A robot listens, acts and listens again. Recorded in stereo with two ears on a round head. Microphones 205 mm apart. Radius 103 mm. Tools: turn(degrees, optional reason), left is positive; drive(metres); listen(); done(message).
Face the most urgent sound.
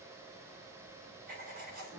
listen()
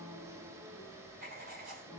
listen()
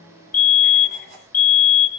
turn(degrees=40, reason="The fire alarm: about 40° left or 140° left.")
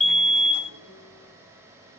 done("Found it: a fire alarm, straight ahead, 2 to 4 m away.")